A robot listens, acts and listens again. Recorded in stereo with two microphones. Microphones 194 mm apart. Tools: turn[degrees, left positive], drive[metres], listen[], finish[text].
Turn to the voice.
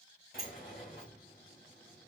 Action: listen[]
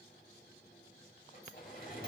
Action: listen[]
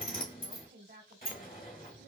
Thought: The woman speaking: about 60° right or 120° right.
Action: turn[-60]
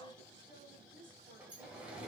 Thought: So it is at 30° right.
Action: turn[-30]
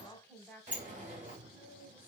Action: finish[Facing the woman speaking, 1 to 2 m away.]